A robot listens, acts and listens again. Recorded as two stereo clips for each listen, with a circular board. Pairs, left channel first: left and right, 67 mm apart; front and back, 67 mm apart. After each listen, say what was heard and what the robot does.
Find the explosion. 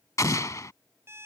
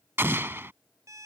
The explosion: 125° left. Turn 125° left.
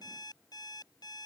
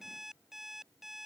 I heard an explosion from this way, but can't make it out now.